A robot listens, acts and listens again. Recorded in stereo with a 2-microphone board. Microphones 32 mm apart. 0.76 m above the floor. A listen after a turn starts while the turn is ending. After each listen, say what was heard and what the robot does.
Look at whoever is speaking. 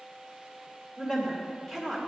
Turn 30° left.
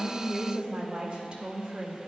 So it is at 25° right. Turn 25° right.
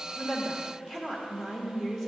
The woman speaking is now 20° left. Turn 20° left.
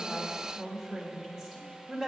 Facing the woman speaking.